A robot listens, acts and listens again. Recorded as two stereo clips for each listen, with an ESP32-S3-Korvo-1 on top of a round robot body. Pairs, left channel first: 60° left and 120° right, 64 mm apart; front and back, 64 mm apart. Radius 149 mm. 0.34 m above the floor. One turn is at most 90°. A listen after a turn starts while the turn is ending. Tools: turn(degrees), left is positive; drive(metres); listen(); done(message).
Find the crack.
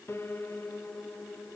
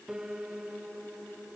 listen()
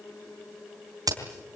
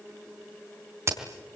turn(degrees=-90)
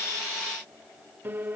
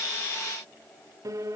turn(degrees=-45)
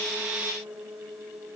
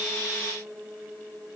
done("I heard a crack from this way, but can't make it out now.")